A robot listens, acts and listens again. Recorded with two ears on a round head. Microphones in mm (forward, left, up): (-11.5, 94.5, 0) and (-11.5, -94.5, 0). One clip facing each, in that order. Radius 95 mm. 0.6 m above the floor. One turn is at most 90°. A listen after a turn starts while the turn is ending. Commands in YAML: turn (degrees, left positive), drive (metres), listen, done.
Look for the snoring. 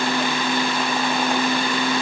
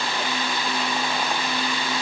listen: true
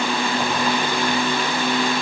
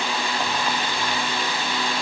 listen: true
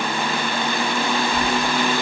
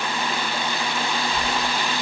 turn: 30
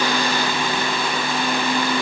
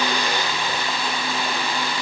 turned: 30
listen: true
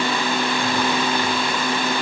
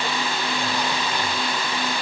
listen: true
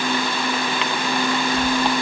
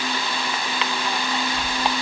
turn: -15
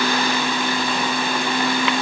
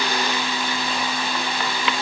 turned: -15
listen: true
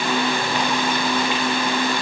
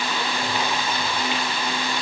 listen: true
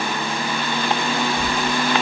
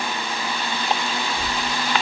done: "Facing the snoring, 1 to 2 m away."